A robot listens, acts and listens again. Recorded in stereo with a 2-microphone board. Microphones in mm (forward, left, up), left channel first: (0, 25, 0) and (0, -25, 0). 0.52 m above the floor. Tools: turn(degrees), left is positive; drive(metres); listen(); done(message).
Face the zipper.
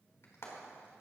listen()
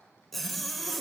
turn(degrees=30)
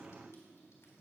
listen()
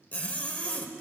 turn(degrees=150)
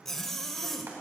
turn(degrees=10)
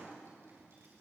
listen()
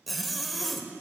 done("Found it: a zipper, straight ahead, 1 to 2 m away.")